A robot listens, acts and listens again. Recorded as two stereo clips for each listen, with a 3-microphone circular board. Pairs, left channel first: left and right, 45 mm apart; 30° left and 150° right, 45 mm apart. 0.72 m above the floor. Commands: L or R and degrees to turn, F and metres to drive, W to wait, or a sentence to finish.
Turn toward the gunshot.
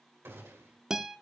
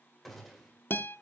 R60
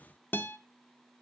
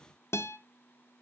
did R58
I heard a gunshot from this way, but can't make it out now.